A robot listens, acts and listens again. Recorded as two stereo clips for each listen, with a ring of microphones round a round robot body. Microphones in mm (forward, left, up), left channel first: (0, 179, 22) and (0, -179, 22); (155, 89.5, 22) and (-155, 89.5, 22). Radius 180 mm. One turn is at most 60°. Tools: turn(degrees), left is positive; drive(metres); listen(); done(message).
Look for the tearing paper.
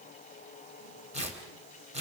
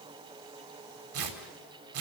turn(degrees=-60)
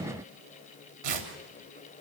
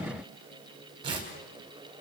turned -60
turn(degrees=-60)
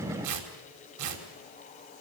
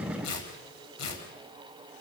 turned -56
turn(degrees=-45)
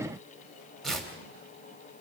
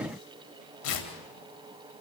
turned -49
done("Found it: tearing paper, straight ahead.")